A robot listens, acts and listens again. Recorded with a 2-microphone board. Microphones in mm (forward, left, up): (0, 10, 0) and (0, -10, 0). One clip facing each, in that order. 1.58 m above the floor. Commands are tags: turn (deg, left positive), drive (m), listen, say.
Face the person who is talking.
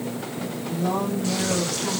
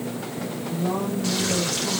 <turn deg="25"/>
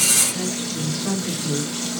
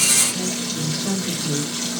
<say>Facing the woman speaking.</say>